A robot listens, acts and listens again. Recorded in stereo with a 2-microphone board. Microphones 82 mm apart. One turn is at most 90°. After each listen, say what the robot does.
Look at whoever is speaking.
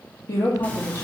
Turn 40° left.
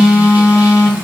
Keep listening.
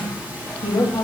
Turn 90° left.
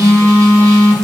Keep listening.
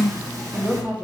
Turn 15° right.
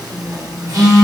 Facing the woman speaking.